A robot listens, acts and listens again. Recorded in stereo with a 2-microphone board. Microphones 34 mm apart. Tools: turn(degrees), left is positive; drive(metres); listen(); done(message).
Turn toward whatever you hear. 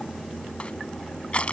turn(degrees=40)
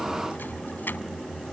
turn(degrees=100)
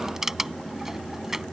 turn(degrees=-15)
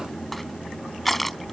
done("Facing the crushing.")